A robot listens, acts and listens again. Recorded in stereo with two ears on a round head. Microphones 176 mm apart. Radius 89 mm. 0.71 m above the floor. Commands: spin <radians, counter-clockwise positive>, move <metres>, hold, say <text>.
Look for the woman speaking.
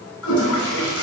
hold
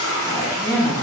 spin 0.52
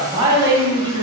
spin -0.44
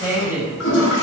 spin -0.26
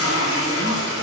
hold
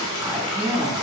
say Found it: a woman speaking, straight ahead, 2 to 4 m away.